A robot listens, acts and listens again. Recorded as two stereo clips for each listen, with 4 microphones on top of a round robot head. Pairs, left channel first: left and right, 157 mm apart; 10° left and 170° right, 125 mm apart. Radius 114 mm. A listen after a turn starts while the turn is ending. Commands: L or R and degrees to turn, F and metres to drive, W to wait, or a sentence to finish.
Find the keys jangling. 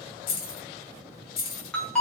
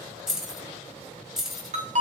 L105
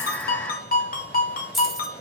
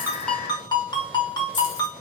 W
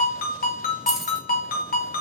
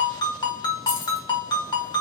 W
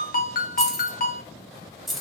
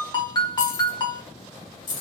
Facing the keys jangling.